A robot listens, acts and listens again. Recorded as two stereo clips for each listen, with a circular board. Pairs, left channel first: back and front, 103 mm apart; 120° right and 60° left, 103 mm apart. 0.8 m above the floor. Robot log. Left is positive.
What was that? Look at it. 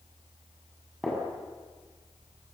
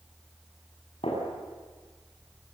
note: The gunshot: 95° right.
cmd yaw -95
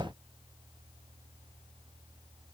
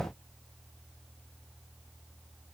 end: I heard a gunshot from this way, but can't make it out now.